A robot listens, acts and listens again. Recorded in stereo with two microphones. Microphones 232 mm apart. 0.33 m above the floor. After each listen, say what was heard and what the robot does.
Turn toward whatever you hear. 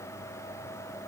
Keep listening.
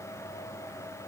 Keep listening.
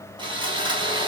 The sawing: about 20° right or 160° right. Turn 20° right.
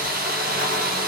So it is at 140° right. Turn 140° right.
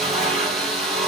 Found it: sawing, straight ahead, 2 to 4 m away.